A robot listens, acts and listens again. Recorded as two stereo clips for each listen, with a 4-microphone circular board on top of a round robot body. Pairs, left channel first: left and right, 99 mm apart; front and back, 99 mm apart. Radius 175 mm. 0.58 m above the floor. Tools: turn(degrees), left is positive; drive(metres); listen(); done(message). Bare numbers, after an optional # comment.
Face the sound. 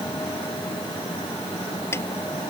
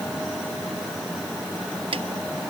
# The snare drum: 155° left.
turn(155)
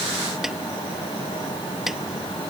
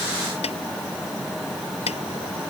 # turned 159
listen()
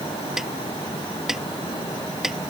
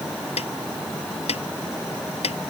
done("Facing the snare drum.")